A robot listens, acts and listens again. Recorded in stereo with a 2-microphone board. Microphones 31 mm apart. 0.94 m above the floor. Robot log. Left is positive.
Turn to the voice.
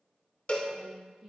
note: The woman speaking: about 20° right or 160° right.
cmd yaw -20
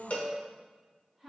cmd yaw -30
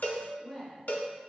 note: So it is at 10° left.
cmd yaw +10
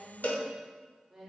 note: The woman speaking is now 15° right.
cmd yaw -15
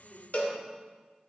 cmd idle
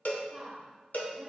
note: The woman speaking is now 15° right.
cmd yaw -15
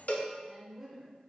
end: Found it: a woman speaking, straight ahead.